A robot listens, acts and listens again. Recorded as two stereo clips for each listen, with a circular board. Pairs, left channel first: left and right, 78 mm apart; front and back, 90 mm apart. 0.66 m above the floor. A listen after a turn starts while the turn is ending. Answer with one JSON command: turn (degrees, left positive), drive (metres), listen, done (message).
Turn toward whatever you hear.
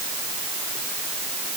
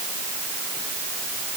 {"listen": true}
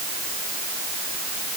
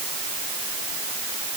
{"listen": true}
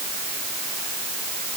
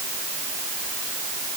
{"done": "I can't make out anything."}